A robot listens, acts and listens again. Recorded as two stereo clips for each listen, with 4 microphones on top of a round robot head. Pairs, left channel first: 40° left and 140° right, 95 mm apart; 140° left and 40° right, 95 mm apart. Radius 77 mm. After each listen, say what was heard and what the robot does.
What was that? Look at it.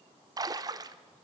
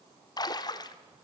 The splash: 175° left. Turn 175° left.
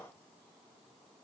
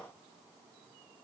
I heard a splash from this way, but can't make it out now.